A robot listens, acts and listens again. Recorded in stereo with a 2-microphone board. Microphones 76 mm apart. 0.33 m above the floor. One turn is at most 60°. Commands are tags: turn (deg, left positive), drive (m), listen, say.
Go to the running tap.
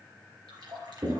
<turn deg="-60"/>
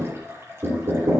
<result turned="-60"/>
<turn deg="-35"/>
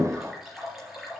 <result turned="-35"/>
<drive m="1.0"/>
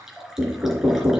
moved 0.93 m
<drive m="1.0"/>
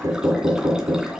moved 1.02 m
<listen/>
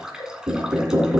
<turn deg="-10"/>
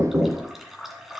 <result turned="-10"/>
<drive m="1.0"/>
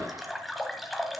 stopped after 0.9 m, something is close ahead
<say>Arrived at the running tap, straight ahead.</say>